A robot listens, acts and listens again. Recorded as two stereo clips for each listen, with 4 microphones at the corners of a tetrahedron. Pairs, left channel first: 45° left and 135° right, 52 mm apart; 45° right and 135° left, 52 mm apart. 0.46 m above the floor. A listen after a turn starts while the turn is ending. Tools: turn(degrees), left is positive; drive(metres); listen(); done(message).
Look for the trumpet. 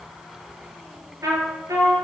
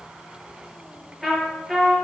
turn(degrees=-135)
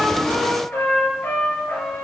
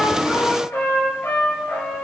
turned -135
done("Facing the trumpet.")